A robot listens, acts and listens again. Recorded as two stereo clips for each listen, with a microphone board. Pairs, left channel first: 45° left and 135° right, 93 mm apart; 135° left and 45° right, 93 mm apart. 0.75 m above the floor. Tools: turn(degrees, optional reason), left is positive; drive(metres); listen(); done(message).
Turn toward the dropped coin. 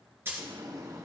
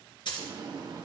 turn(degrees=165, reason="The dropped coin: 165° left.")
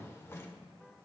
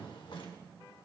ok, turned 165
done("I heard a dropped coin from this way, but can't make it out now.")